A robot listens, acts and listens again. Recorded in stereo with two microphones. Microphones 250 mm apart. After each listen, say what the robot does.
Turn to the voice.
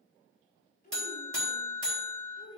Turn 25° left.
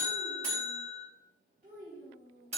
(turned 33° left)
Turn 45° right.
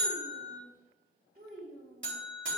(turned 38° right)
Turn 35° right.
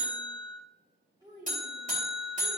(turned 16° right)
Turn 20° right.
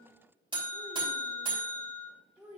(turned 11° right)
Facing the child speaking.